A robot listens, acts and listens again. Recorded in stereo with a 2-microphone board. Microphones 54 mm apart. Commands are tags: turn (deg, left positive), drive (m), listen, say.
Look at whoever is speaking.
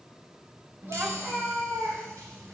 <turn deg="-40"/>
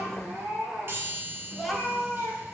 <say>Facing the child speaking.</say>